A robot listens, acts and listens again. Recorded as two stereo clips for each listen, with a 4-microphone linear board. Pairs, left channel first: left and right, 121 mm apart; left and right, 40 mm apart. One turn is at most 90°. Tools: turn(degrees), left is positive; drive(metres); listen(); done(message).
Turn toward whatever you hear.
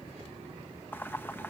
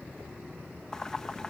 turn(degrees=15)
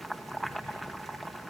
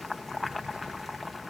done("Facing the boiling.")